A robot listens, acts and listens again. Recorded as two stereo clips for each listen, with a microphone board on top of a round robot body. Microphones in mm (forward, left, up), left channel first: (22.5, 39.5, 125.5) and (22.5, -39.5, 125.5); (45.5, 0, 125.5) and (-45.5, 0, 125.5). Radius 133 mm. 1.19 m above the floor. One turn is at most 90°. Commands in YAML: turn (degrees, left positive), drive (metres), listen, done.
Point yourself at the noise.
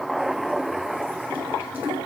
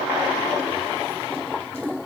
listen: true
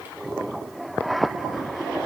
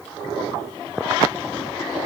listen: true
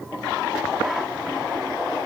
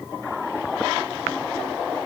done: "I can't make out anything to turn to."